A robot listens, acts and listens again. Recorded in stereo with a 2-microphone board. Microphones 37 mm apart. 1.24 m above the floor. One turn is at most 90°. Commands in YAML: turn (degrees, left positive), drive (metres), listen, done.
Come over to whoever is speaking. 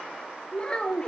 turn: 25
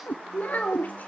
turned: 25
turn: 90
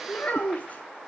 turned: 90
turn: 45
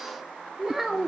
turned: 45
turn: -10
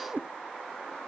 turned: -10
listen: true
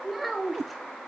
drive: 1.0
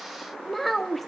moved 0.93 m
drive: 1.0
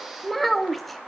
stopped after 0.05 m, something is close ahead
done: "Arrived at the child speaking, straight ahead."